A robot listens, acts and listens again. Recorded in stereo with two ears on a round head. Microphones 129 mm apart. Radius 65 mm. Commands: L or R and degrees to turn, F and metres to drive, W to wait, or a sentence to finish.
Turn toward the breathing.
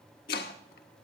W
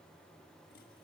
W
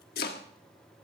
I can't make out breathing to turn to.